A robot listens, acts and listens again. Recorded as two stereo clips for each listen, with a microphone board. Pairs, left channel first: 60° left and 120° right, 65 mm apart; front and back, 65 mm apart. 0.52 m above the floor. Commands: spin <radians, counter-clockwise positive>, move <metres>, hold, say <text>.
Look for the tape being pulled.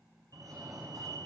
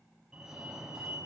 hold
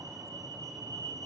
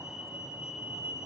hold
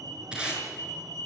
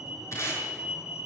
spin -0.79
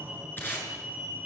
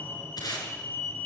say Facing the tape being pulled.